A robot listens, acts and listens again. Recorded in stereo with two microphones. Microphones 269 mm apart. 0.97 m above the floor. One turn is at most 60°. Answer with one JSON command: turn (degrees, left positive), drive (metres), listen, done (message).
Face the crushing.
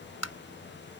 {"listen": true}
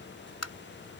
{"listen": true}
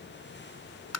{"done": "I can't make out crushing, only tapping."}